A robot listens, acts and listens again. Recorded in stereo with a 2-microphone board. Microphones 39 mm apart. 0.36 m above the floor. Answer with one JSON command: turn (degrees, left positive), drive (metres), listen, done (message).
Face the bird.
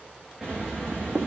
{"turn": -20}
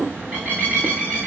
{"turn": -140}
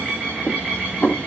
{"turn": -35}
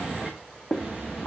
{"done": "Found it: a bird, straight ahead, over 4 m away."}